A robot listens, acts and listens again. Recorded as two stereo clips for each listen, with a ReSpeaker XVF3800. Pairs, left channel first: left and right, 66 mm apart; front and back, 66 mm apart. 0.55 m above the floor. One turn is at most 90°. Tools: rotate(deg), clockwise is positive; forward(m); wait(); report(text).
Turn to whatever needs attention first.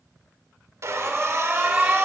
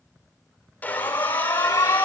rotate(20)
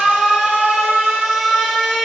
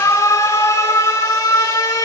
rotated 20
report("Facing the alarm.")